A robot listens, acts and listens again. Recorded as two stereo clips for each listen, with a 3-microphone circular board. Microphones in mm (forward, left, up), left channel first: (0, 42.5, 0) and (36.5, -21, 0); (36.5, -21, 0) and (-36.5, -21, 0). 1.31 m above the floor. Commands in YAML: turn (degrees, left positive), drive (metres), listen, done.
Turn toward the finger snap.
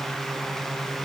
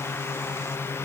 listen: true
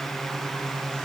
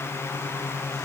listen: true
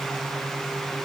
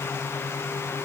done: "I can't make out a finger snap to turn to."